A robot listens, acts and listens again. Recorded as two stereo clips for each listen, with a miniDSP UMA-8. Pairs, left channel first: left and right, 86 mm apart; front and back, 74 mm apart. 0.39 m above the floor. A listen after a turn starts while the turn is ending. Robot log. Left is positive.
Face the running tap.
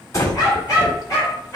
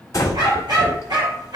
cmd idle
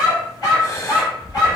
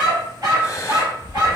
cmd idle
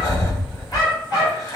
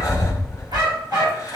end: I can't make out a running tap, only a dog barking and breathing.